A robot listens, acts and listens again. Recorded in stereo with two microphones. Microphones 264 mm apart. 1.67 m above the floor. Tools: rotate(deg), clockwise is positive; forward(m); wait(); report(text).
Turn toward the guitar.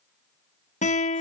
rotate(-25)
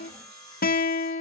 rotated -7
rotate(-35)
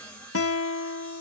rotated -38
rotate(-100)
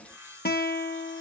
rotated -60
rotate(-40)
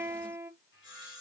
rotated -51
rotate(10)
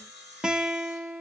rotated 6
report("Found it: a guitar, straight ahead.")